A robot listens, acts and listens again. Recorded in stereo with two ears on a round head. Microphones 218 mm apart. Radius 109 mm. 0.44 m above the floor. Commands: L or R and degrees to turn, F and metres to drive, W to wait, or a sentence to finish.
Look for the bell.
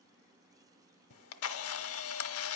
W
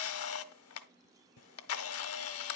W
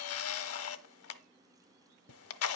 I can't make out a bell, only a camera shutter.